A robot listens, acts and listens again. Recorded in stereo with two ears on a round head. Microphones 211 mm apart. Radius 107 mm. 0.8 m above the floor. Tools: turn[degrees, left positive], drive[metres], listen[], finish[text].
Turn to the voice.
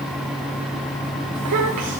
Thought: The child speaking: about 75° right or 105° right.
Action: turn[-75]
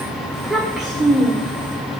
Action: finish[Facing the child speaking, 1 to 2 m away.]